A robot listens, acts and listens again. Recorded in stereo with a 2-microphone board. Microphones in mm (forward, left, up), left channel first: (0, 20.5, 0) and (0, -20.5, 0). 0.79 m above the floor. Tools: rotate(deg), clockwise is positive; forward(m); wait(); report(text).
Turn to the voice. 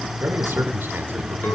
rotate(60)
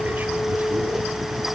wait()
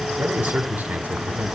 rotate(50)
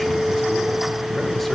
wait()
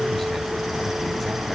wait()
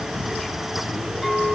report("I heard a man speaking from this way, but can't make it out now.")